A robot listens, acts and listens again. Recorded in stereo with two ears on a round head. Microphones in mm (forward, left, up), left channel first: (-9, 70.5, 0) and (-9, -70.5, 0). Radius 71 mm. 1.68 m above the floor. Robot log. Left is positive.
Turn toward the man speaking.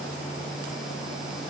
cmd idle
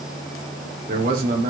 note: The man speaking: about 55° right or 125° right.
cmd yaw -55
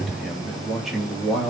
end: Found it: a man speaking, straight ahead, 2 to 4 m away.